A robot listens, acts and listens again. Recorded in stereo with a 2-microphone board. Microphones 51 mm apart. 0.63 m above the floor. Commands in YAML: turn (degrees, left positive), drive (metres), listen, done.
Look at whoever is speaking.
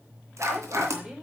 turn: -15
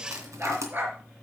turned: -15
listen: true
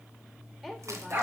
done: "Found it: a woman speaking, straight ahead, 2 to 4 m away."